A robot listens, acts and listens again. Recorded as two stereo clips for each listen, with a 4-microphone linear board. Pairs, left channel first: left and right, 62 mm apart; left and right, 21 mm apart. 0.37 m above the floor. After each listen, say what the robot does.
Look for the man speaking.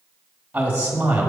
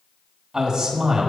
Turn 25° right.
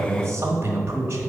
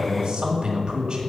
Turn 125° right.
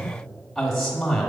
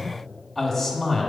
Found it: a man speaking, straight ahead, 1 to 2 m away.